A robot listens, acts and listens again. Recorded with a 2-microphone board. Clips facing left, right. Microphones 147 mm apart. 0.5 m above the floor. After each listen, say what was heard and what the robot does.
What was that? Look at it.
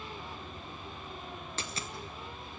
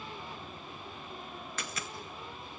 The dropped coin: about 30° left or 150° left. Turn 30° left.
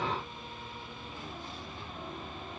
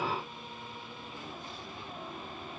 Keep listening.
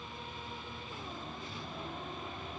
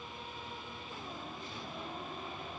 I heard a dropped coin, but can't make it out now. It was about straight ahead or 120° left.